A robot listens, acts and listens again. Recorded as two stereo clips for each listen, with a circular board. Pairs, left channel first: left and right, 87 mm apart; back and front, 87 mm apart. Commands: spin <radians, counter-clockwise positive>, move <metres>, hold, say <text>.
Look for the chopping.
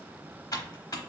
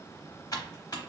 hold
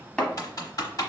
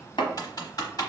spin 2.97
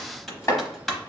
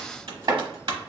spin 0.61
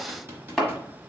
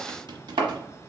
say Facing the chopping, 1 to 2 m away.